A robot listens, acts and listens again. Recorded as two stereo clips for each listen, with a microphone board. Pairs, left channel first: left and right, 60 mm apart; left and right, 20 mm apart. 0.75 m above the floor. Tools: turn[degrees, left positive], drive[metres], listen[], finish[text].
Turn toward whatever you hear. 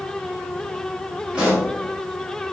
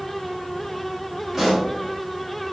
Thought: The pop: about 15° right or 165° right.
Action: turn[-15]
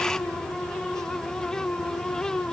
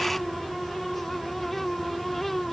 Action: listen[]
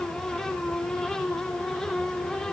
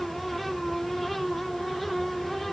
Action: finish[I heard a pop, but can't make it out now. It was about straight ahead or 150° right.]